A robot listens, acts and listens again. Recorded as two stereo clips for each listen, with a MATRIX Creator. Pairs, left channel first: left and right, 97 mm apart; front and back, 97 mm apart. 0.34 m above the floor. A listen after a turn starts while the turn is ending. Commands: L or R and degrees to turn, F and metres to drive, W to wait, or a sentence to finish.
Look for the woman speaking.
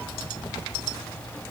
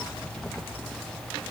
W
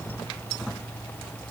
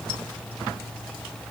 W
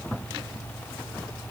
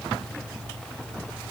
I can't make out a woman speaking.